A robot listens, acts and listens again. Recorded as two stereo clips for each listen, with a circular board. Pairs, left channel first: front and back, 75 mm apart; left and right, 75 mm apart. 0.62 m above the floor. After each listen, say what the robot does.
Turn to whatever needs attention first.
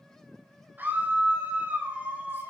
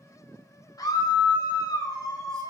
Turn 115° left.
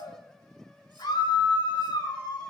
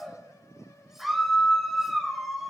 Found it: a scream, straight ahead, 2 to 4 m away.